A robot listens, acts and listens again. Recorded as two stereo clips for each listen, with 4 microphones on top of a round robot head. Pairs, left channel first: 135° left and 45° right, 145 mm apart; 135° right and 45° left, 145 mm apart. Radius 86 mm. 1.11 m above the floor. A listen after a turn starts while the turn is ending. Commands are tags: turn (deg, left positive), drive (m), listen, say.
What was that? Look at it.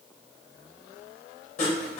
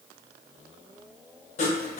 <turn deg="180"/>
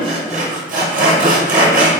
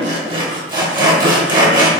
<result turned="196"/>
<turn deg="-15"/>
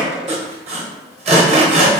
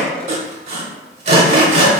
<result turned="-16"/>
<say>Found it: sawing, straight ahead, under 1 m away.</say>